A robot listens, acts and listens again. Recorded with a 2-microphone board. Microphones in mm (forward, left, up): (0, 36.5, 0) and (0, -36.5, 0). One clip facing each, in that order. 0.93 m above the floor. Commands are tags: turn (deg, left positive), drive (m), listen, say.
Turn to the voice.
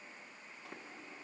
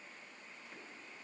<listen/>
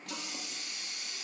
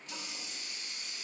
<listen/>
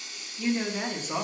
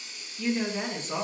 <turn deg="30"/>
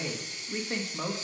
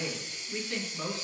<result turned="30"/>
<turn deg="135"/>
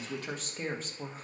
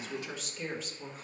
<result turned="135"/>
<turn deg="50"/>
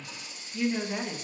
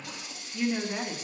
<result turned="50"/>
<say>Found it: a woman speaking, straight ahead.</say>